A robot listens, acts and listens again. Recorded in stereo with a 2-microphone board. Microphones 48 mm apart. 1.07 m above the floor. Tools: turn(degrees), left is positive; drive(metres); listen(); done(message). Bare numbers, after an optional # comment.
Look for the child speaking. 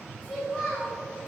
turn(30)
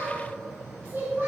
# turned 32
# So it is at 30° right.
turn(-30)
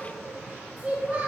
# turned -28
# The child speaking is now 15° right.
turn(-15)
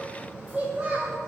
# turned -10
# The child speaking is now 15° right.
turn(-15)
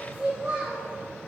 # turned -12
# The child speaking is now 10° right.
turn(-10)
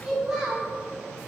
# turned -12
done("Found it: a child speaking, straight ahead.")